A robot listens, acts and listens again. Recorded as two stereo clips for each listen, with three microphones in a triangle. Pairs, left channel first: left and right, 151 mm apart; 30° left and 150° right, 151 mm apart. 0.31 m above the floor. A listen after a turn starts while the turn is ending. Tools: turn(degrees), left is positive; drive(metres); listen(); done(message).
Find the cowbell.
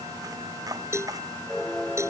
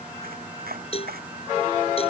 turn(degrees=-20)
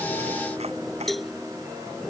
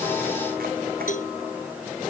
done("Facing the cowbell.")